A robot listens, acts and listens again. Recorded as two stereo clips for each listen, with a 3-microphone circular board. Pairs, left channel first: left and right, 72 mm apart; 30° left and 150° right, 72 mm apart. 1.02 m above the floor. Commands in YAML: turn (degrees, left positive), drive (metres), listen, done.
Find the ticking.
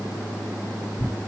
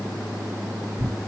listen: true
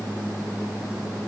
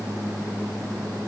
listen: true
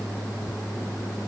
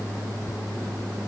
done: "I can't make out ticking, only tearing paper."